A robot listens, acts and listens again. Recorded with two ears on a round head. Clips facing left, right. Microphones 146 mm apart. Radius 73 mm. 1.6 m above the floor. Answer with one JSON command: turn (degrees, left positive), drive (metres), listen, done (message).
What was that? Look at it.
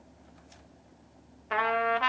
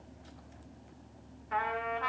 {"turn": 90}
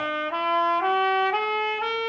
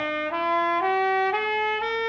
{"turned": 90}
{"done": "Found it: a trumpet, straight ahead, 1 to 2 m away."}